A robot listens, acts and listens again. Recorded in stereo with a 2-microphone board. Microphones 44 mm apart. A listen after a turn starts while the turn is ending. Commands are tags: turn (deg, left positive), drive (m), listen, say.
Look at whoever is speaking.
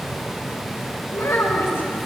<turn deg="70"/>
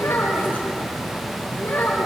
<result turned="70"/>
<turn deg="40"/>
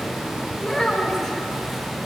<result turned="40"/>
<say>Facing the child speaking.</say>